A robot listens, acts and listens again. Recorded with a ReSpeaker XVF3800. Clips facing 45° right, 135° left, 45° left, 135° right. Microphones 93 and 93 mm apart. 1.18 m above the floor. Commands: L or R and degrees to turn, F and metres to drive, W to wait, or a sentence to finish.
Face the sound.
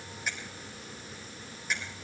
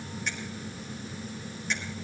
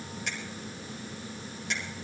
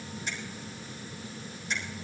L35
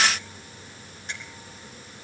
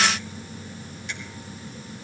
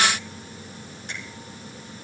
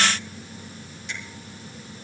Found it: a finger snap, straight ahead.